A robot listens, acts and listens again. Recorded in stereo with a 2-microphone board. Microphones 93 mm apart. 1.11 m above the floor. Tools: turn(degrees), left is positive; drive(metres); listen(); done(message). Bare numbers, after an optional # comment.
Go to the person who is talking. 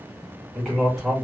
turn(30)
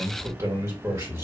# So it is at 35° right.
turn(-35)
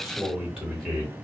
drive(1.0)
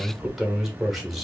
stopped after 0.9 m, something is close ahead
done("I am next to the man speaking.")